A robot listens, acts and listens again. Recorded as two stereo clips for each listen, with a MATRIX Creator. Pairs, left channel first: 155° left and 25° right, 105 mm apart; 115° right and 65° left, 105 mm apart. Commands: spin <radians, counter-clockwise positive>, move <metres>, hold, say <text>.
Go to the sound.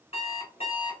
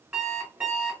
spin 2.53
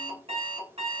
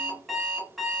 spin -0.44
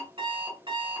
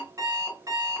spin 0.17
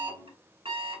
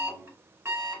move 1.0
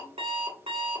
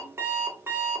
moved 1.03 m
move 1.0
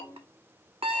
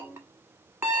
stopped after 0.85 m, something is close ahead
say I am next to the alarm clock.